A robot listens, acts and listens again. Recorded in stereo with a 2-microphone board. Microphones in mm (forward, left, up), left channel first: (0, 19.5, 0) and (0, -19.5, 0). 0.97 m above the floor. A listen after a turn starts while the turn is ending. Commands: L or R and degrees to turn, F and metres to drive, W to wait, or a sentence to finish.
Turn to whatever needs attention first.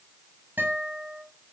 W
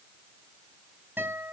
W
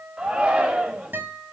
R25
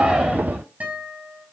W
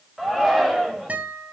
Found it: a shout, straight ahead.